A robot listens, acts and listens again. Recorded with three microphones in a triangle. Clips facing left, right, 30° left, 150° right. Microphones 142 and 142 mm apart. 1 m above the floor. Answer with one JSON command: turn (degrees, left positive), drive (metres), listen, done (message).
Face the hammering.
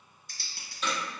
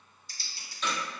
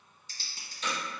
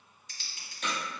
{"turn": 175}
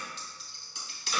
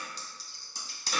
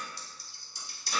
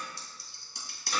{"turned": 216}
{"turn": -40}
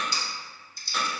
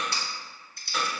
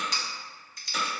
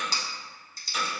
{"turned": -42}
{"done": "Found it: hammering, straight ahead."}